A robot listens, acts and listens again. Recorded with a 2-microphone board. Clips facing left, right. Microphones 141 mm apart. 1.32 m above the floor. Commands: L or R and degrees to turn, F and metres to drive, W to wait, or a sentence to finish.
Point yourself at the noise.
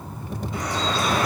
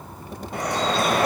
R60
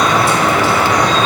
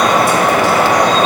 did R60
R60
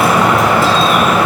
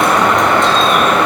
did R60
Facing the dripping.